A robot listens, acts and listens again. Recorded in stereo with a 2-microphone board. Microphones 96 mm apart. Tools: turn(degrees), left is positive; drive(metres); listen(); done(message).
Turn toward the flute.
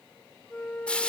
turn(degrees=30)
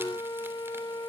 turn(degrees=130)
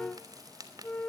turn(degrees=15)
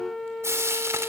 done("Found it: a flute, straight ahead.")